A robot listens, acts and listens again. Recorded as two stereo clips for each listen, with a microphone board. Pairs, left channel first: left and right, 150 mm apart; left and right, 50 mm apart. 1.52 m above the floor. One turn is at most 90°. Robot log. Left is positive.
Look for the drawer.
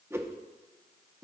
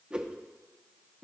cmd idle
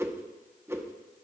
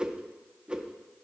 cmd idle
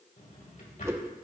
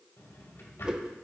note: The drawer: about 65° left or 115° left.
cmd yaw +65
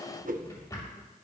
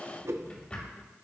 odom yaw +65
note: So it is at 25° left.
cmd yaw +25
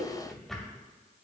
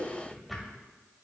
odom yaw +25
end: Found it: a drawer, straight ahead, 2 to 4 m away.